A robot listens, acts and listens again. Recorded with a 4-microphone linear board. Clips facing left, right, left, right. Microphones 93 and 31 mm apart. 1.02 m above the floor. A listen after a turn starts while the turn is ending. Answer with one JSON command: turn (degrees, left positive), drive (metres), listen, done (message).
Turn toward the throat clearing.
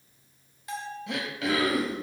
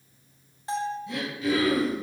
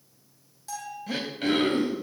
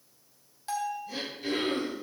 {"turn": 90}
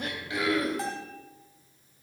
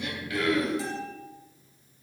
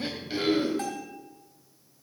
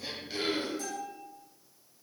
{"done": "Facing the throat clearing, 2 to 4 m away."}